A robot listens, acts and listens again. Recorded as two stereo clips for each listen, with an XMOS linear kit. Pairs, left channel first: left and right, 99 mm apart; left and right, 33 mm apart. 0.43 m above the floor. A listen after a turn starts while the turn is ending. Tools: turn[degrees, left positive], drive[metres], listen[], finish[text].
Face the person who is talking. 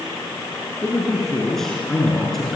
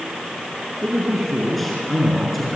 Action: turn[30]
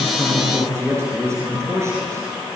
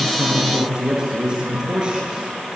Thought: So it is at 30° right.
Action: turn[-30]
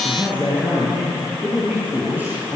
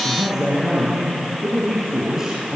Thought: The man speaking is now 15° right.
Action: turn[-15]
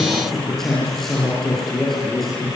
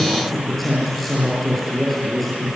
Action: finish[Facing the man speaking.]